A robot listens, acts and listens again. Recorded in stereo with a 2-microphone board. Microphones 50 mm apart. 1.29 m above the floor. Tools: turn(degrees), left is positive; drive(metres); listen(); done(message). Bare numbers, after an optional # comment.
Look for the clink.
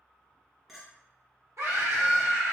turn(-30)
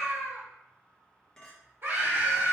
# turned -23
# So it is at 15° left.
turn(15)
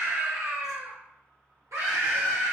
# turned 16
listen()
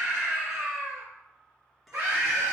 done("Facing the clink.")